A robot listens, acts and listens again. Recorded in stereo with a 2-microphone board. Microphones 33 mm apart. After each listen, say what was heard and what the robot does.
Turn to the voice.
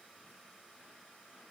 Keep listening.
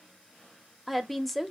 Turn 30° left.
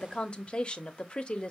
So it is at 145° left. Turn 145° left.
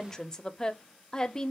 The woman speaking is now 20° left. Turn 20° left.
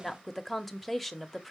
Facing the woman speaking.